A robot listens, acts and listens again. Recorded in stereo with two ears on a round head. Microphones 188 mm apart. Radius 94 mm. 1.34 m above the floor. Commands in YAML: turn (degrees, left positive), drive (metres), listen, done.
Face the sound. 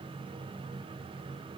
listen: true
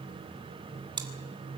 turn: -20
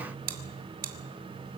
turn: -135
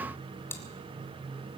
turn: 10
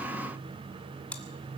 done: "Facing the chewing, 2 to 4 m away."